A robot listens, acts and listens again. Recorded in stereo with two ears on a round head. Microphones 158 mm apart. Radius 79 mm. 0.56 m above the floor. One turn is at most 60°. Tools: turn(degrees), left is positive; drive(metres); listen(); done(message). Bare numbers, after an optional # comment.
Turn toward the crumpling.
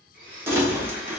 turn(-30)
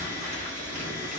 # So it is at 130° right.
turn(-60)
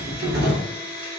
# The crumpling is now 95° right.
turn(-60)
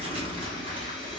# The crumpling is now 35° right.
turn(-35)
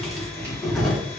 done("Facing the crumpling, under 1 m away.")